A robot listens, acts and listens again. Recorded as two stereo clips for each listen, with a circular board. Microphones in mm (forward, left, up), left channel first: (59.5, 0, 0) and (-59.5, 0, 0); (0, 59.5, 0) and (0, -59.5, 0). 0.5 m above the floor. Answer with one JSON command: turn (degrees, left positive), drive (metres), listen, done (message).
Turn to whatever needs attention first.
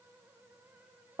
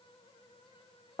{"listen": true}
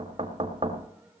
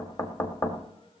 {"listen": true}
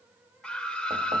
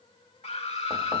{"turn": 80}
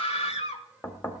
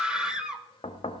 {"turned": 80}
{"done": "Found it: a scream, straight ahead, 1 to 2 m away."}